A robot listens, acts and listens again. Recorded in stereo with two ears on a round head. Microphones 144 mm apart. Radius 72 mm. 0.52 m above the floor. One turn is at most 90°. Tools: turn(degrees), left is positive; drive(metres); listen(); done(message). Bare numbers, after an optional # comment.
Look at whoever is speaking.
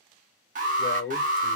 # The man speaking: about 55° left or 125° left.
turn(55)
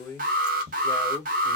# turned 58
# So it is at 25° left.
turn(25)
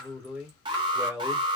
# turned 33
# The man speaking is now 10° right.
turn(-10)
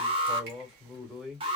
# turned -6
done("Found it: a man speaking, straight ahead.")